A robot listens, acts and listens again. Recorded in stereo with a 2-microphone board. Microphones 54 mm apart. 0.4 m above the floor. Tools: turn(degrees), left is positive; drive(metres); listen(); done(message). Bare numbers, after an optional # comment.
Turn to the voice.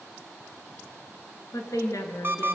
# The woman speaking: about 70° left or 110° left.
turn(70)
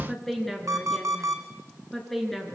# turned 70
done("Found it: a woman speaking, straight ahead, over 4 m away.")